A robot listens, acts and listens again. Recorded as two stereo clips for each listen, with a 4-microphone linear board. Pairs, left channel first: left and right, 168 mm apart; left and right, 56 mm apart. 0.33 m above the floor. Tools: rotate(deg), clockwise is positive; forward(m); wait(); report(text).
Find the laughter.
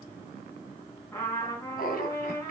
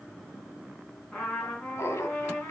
rotate(-60)
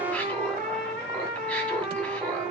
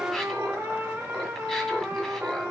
wait()
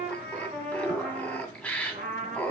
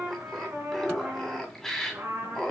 report("Facing the laughter.")